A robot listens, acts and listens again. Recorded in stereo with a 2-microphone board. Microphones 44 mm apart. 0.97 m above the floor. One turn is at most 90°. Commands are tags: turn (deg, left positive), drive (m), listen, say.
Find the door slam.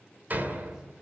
<turn deg="-45"/>
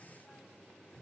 <listen/>
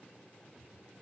<say>I heard a door slam, but can't make it out now. It was about straight ahead or 90° right.</say>